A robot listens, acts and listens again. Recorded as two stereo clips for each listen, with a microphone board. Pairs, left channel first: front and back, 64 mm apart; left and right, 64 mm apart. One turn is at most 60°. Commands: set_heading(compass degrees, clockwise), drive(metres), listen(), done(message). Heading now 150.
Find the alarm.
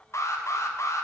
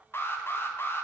set_heading(110)
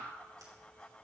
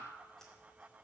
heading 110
listen()
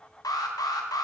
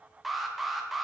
done("Facing the alarm.")